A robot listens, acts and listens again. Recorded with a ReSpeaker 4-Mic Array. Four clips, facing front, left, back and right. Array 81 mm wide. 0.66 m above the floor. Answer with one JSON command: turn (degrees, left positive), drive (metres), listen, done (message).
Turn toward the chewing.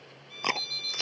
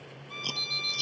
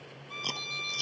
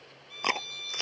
{"turn": -50}
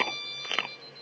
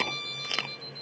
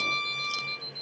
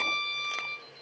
{"turn": 15}
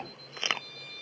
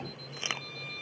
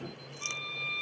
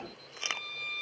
{"done": "Found it: chewing, straight ahead."}